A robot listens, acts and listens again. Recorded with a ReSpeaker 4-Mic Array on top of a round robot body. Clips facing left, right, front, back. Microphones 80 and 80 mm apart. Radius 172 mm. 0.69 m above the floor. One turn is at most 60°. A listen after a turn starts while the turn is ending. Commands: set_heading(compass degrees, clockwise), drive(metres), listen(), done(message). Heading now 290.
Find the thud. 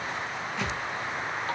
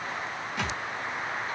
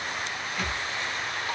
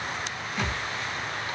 set_heading(350)
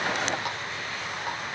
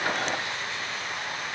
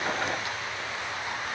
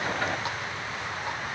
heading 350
set_heading(50)
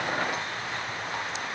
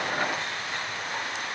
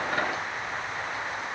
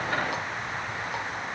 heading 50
done("Facing where the thud came from. I can't hear it now.")